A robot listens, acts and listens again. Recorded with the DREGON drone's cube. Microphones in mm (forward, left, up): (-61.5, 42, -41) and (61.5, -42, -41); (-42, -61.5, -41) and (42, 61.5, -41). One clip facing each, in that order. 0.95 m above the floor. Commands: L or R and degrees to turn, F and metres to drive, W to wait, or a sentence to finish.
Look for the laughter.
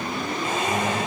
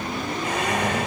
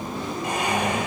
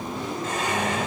R50
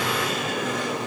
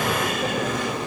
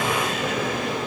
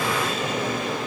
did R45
W
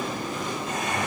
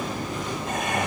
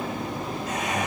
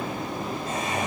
Found it: laughter, straight ahead.